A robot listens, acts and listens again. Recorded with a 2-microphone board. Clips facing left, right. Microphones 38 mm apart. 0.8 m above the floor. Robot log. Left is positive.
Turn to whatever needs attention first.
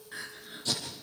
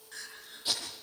note: The crying: about 25° left or 155° left.
cmd yaw +25
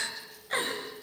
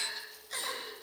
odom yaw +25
note: So it is at 135° left.
cmd yaw +135
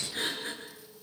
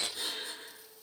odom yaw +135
note: The crying is now 50° left.
cmd yaw +50
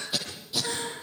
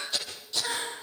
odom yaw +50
note: The crying is now 15° right.
cmd yaw -15
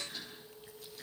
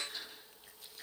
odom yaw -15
end: Found it: crying, straight ahead, over 4 m away.